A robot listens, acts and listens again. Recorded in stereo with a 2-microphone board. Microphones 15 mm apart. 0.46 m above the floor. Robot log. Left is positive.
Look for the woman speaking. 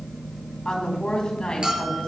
note: The woman speaking: about 65° left or 115° left.
cmd yaw +65
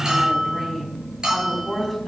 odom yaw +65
note: So it is at 10° left.
cmd yaw +10
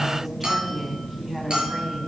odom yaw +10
cmd idle
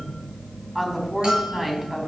end: Facing the woman speaking.